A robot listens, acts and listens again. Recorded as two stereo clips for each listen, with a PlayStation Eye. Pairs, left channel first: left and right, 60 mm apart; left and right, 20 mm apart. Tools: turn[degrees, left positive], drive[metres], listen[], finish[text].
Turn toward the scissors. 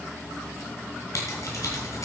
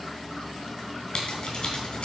Thought: The scissors: about 55° left or 125° left.
Action: turn[55]
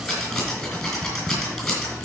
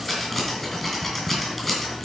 Action: finish[Found it: scissors, straight ahead, 2 to 4 m away.]